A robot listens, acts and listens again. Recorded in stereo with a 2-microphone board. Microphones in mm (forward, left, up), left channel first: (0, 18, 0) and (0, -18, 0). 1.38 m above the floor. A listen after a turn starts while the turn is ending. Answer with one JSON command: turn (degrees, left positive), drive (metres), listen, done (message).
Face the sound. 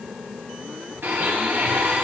{"turn": -90}
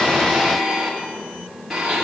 {"done": "Found it: a blender, straight ahead, 2 to 4 m away."}